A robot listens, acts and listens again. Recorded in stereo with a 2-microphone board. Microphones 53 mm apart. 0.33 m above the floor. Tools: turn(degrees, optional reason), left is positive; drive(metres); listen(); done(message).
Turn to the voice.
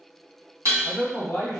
turn(degrees=40, reason="The man speaking: about 40° left or 140° left.")
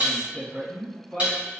turn(degrees=10, reason="So it is at 10° left.")
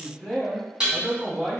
done("Found it: a man speaking, straight ahead, 1 to 2 m away.")